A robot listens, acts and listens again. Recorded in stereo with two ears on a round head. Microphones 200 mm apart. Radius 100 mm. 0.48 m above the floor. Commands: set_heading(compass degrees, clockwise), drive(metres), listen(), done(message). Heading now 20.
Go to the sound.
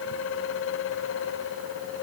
listen()
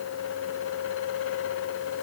listen()
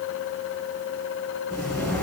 set_heading(350)
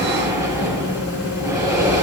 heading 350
set_heading(5)
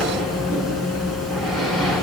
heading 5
drive(1.0)
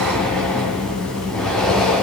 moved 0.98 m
drive(1.0)
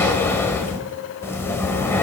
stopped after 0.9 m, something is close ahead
set_heading(355)
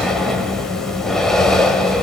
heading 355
done("I am next to the breathing.")